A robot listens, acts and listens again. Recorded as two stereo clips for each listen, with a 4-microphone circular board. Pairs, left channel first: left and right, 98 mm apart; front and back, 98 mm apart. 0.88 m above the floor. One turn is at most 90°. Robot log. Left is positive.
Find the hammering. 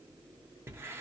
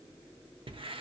cmd idle
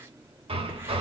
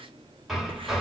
note: The hammering: 90° right.
cmd yaw -90
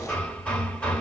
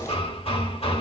note: The hammering is now 15° left.
cmd yaw +15
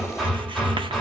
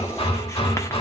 end: Found it: hammering, straight ahead.